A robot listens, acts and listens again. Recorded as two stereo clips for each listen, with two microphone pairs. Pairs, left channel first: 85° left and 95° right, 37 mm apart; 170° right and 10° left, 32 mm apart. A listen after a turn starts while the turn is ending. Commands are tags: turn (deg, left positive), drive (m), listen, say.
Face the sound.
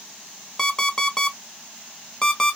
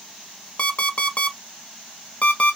<turn deg="155"/>
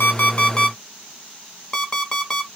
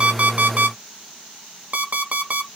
<turn deg="20"/>
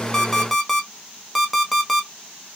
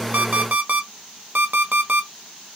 <say>Facing the alarm clock.</say>